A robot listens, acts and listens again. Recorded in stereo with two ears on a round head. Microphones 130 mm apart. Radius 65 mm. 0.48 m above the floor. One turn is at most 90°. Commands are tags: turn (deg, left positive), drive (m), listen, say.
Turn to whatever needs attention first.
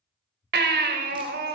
<turn deg="-75"/>
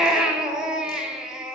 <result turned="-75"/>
<say>Found it: a baby crying, straight ahead, 1 to 2 m away.</say>